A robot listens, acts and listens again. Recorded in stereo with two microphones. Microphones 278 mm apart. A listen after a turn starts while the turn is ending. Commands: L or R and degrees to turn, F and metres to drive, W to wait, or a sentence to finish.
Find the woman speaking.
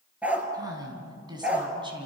R15
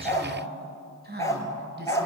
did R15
R40
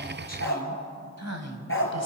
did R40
R105
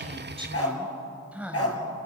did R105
Facing the woman speaking.